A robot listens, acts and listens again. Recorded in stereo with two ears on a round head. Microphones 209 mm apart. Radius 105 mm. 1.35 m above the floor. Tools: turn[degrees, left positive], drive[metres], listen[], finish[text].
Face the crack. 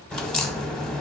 Action: turn[30]
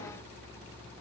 Action: listen[]
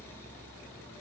Action: finish[I heard a crack, but can't make it out now. It was about 25° right or 145° left.]